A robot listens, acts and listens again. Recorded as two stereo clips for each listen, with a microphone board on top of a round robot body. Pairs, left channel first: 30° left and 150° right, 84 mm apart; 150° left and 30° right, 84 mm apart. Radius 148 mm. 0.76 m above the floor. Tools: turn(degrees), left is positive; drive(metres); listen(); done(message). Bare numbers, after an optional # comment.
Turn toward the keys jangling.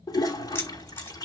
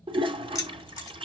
# The keys jangling: 100° left.
turn(100)
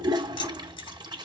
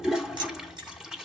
listen()
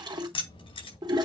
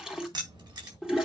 # The keys jangling is now 15° left.
turn(15)
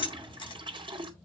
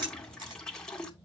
done("Facing the keys jangling.")